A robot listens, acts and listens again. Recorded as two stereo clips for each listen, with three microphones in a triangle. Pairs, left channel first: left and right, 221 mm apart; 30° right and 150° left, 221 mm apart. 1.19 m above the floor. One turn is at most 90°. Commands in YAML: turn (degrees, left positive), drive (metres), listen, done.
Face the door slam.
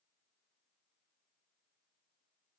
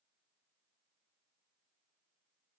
listen: true
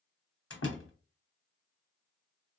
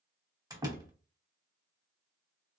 turn: 75
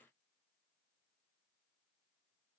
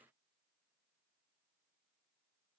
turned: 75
done: "Facing where the door slam came from. I can't hear it now."